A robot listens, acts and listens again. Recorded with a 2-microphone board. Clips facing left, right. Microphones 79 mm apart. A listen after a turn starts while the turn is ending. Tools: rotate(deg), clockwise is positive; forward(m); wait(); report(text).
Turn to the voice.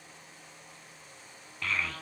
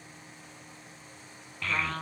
rotate(-30)
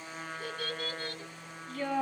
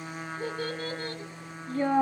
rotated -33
rotate(30)
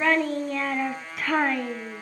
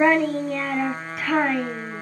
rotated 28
report("Facing the child speaking, 1 to 2 m away.")